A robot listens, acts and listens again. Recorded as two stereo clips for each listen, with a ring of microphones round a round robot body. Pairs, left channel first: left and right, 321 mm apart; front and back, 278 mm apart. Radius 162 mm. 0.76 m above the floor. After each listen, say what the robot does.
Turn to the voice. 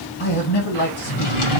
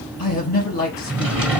Turn 30° left.
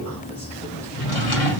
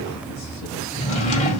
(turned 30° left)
Keep listening.
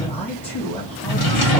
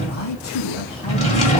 Found it: a man speaking, straight ahead.